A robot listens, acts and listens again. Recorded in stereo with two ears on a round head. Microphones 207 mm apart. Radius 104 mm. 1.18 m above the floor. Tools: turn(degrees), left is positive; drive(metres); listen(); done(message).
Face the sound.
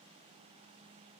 listen()
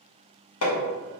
turn(degrees=75)
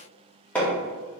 done("Facing the hammering.")